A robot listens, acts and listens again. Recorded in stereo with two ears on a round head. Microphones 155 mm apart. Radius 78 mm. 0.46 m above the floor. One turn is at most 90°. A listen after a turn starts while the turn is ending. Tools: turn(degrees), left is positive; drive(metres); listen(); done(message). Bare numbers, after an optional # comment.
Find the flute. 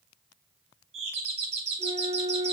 # The flute: about 25° left or 155° left.
turn(25)
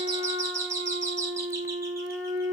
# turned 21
# So it is at 130° left.
turn(90)
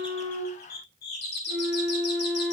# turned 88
# The flute is now 40° left.
turn(40)
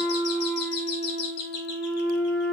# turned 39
done("Facing the flute, over 4 m away.")